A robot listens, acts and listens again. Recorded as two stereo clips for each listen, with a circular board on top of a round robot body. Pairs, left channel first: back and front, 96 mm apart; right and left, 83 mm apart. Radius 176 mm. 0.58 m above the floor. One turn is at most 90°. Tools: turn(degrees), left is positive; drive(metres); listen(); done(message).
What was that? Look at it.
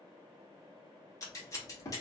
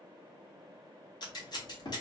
turn(degrees=-90)
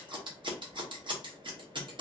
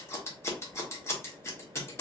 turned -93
turn(degrees=-30)
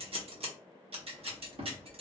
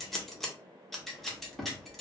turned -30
done("Facing the scissors.")